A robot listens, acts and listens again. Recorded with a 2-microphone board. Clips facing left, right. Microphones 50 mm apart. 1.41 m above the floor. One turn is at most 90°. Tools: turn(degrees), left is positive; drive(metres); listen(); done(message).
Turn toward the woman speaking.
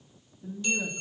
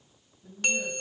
turn(degrees=70)
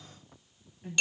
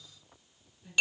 turn(degrees=50)
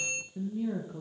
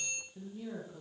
turn(degrees=20)
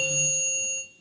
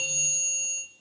listen()
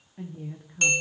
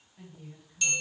turn(degrees=45)
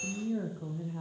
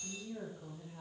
turn(degrees=25)
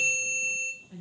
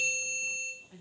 done("Found it: a woman speaking, straight ahead, 1 to 2 m away.")